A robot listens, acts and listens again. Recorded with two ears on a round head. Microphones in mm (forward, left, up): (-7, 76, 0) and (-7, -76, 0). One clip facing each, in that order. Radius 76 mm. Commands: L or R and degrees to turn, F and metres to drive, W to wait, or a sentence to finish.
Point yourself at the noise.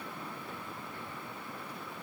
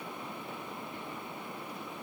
W
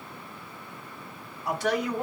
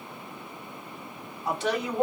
R25
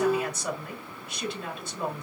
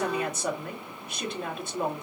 R135
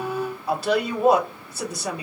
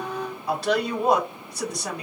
Found it: a woman speaking, straight ahead.